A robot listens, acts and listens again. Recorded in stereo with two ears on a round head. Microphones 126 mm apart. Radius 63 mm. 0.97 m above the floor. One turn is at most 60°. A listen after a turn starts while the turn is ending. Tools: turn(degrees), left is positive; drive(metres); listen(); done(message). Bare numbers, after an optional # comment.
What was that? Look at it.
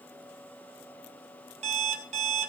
# The alarm clock: about 45° right or 135° right.
turn(-45)
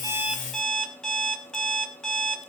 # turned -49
done("Found it: an alarm clock, straight ahead, 2 to 4 m away.")